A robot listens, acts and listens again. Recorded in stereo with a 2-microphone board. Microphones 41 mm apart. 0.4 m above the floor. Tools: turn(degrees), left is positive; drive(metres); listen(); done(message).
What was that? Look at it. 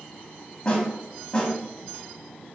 turn(degrees=20)
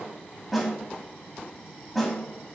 done("Found it: a snare drum, straight ahead, 1 to 2 m away.")